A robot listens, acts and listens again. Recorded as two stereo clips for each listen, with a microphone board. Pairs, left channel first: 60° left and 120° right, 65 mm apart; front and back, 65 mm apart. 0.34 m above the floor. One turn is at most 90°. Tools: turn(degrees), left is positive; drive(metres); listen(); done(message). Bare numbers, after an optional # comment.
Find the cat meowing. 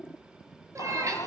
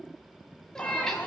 # The cat meowing: 80° right.
turn(-80)
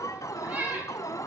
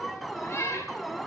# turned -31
# The cat meowing is now 50° right.
turn(-50)
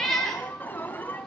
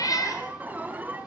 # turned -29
# The cat meowing is now 25° right.
turn(-25)
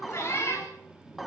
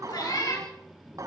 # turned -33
# The cat meowing is now 10° left.
turn(10)
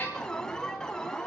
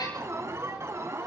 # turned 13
listen()
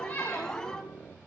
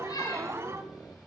listen()
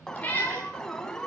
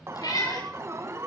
done("Found it: a cat meowing, straight ahead.")